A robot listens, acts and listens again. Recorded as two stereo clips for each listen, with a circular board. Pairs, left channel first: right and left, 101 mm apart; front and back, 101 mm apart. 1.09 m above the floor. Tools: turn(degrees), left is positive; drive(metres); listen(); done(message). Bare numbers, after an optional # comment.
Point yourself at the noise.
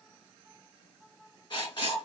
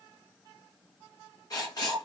# The writing: 50° right.
turn(-50)
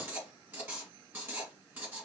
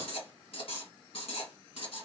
# The writing is now 15° left.
turn(15)
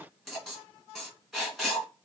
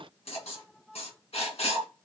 done("Facing the writing, 1 to 2 m away.")